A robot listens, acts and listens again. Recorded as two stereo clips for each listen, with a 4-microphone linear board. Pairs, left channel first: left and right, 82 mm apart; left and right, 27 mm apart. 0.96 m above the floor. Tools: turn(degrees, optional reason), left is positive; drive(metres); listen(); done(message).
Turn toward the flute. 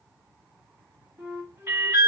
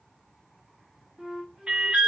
turn(degrees=-30, reason="The flute: about 30° right or 150° right.")
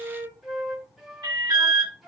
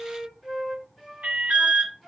done("Facing the flute.")